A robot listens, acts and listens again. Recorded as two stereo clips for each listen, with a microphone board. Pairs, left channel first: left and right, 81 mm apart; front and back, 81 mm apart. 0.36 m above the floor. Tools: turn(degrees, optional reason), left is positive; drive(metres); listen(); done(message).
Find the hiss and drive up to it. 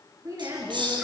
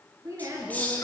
turn(degrees=-70, reason="The hiss: 70° right.")
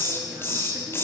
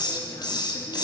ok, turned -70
turn(degrees=30, reason="The hiss is now 30° left.")
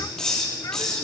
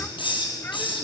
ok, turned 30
drive(metres=1.0)
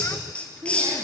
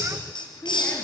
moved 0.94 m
turn(degrees=15, reason="The hiss is now 15° left.")
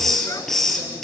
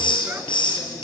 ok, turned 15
drive(metres=1.0)
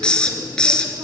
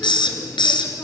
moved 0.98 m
turn(degrees=10, reason="The hiss is now 10° left.")
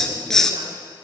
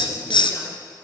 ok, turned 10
drive(metres=1.0)
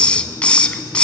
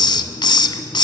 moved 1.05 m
turn(degrees=15, reason="The hiss is now 15° left.")
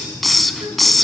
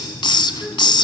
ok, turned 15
drive(metres=1.0)
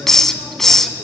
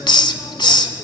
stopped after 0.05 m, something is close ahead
done("Arrived at the hiss, straight ahead.")